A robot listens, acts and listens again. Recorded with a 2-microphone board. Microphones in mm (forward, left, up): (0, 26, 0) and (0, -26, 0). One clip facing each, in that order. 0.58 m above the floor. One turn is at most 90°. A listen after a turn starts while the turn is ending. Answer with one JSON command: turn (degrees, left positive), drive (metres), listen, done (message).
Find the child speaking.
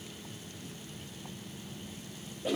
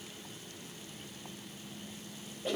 {"listen": true}
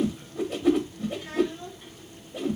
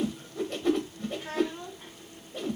{"turn": -50}
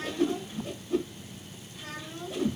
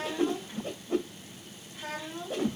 {"turn": -80}
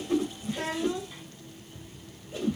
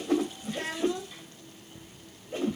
{"turn": 20}
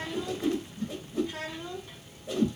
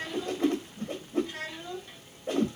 {"turn": 10}
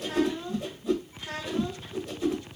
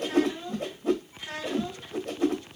{"done": "Found it: a child speaking, straight ahead, 2 to 4 m away."}